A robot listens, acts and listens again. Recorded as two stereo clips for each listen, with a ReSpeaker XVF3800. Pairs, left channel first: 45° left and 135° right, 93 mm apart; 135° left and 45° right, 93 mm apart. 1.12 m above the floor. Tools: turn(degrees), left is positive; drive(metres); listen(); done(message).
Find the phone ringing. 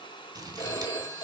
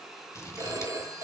turn(degrees=10)
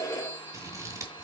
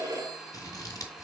done("Found it: a phone ringing, straight ahead, 1 to 2 m away.")